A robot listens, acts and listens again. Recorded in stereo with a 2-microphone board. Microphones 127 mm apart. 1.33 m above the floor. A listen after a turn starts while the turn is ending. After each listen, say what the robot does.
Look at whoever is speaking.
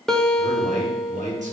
Turn 70° right.
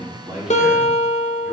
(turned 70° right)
Keep listening.
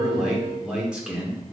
Turn 10° right.
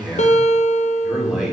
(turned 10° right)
Facing the man speaking, 2 to 4 m away.